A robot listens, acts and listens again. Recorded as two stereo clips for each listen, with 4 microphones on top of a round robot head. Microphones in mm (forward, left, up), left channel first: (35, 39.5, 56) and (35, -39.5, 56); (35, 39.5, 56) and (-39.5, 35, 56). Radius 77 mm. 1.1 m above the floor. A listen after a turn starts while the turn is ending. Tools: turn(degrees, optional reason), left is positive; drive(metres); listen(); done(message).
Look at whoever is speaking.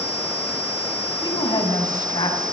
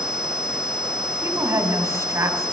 turn(degrees=135, reason="The woman speaking: 135° left.")
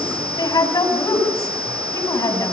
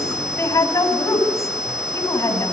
turn(degrees=50, reason="The woman speaking is now 50° left.")
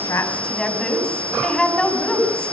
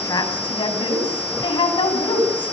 turn(degrees=10, reason="The woman speaking is now 10° left.")
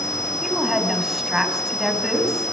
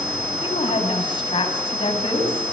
done("Facing the woman speaking.")